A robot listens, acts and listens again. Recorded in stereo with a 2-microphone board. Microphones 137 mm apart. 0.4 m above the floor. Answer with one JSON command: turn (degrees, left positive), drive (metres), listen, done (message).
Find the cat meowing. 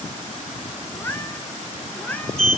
{"turn": 30}
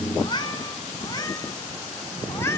{"turn": 20}
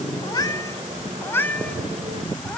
{"turn": 30}
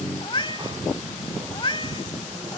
{"turn": 140}
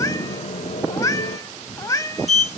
{"turn": 25}
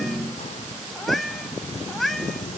{"done": "Found it: a cat meowing, straight ahead."}